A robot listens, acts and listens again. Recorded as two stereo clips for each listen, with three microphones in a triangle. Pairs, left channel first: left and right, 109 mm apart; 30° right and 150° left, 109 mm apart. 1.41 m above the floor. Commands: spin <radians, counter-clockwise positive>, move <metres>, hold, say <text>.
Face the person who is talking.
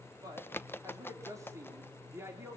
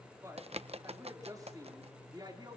spin -2.79
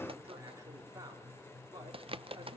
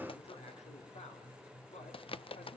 hold
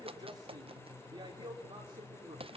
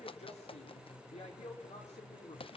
spin -0.70
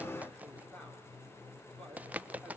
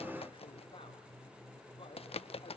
hold
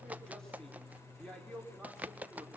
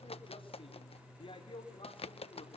say Facing the man speaking, over 4 m away.